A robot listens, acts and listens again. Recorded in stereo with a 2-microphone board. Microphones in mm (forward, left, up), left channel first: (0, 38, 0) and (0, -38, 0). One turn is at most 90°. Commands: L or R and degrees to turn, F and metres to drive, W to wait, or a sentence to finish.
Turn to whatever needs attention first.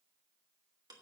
W
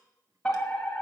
L30
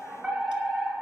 R15
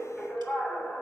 Found it: a fire alarm, straight ahead, 2 to 4 m away.